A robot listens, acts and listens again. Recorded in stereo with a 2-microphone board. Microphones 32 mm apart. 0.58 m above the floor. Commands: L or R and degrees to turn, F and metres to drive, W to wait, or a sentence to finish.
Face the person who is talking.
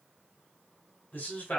L70
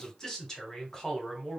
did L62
L20
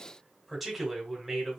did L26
Facing the man speaking.